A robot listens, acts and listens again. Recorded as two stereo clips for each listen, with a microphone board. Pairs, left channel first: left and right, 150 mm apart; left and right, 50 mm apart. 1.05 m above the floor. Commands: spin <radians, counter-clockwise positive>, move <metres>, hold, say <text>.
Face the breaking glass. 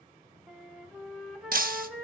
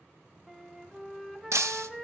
spin -1.22
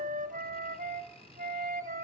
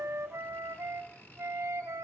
hold
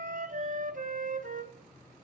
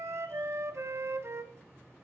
say I heard breaking glass, but can't make it out now. It was about straight ahead or 40° right.